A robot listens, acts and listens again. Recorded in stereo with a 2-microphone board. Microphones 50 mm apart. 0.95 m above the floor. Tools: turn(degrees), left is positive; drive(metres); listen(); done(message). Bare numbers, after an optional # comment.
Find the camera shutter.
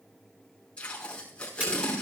# The camera shutter: about 30° right or 150° right.
turn(-30)
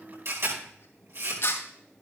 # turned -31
# So it is at 120° right.
turn(-120)
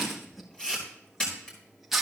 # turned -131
# The camera shutter is now 15° left.
turn(15)
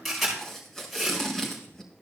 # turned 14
done("Facing the camera shutter, over 4 m away.")